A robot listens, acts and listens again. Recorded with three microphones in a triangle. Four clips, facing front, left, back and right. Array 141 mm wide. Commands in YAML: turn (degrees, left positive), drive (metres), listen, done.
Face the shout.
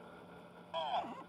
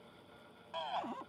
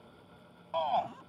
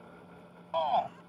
turn: -120
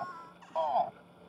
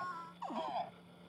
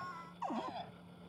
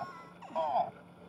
turn: -30
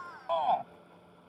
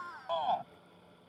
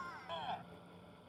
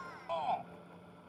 turn: 15
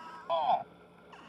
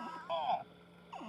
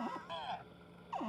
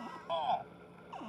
done: "Found it: a shout, straight ahead."